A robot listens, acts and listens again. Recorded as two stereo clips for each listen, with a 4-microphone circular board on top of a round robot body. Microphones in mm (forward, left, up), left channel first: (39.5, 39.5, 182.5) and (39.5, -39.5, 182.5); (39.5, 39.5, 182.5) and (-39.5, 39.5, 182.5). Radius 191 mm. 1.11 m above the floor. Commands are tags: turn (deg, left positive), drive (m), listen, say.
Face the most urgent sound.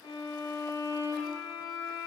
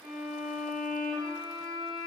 <listen/>
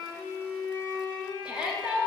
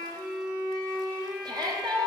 <turn deg="-165"/>
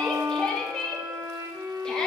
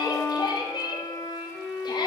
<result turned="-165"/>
<turn deg="10"/>
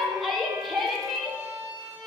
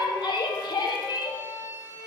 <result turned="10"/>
<say>Found it: a shout, straight ahead.</say>